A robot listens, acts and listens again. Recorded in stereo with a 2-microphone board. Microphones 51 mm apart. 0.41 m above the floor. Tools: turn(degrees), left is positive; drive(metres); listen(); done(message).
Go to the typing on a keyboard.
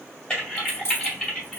turn(degrees=20)
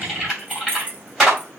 drive(metres=1.0)
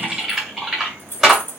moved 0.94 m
drive(metres=1.0)
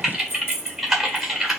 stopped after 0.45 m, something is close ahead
done("Arrived at the typing on a keyboard, straight ahead.")